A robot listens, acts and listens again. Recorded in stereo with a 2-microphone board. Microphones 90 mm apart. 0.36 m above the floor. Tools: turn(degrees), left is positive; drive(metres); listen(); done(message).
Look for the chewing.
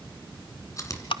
turn(degrees=40)
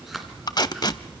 done("Facing the chewing.")